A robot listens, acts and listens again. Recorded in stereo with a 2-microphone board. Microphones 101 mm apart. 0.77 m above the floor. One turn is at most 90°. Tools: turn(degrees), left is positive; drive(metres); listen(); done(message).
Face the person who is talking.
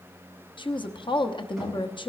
turn(degrees=55)
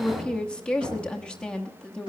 turn(degrees=10)
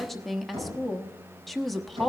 done("Found it: a woman speaking, straight ahead, 1 to 2 m away.")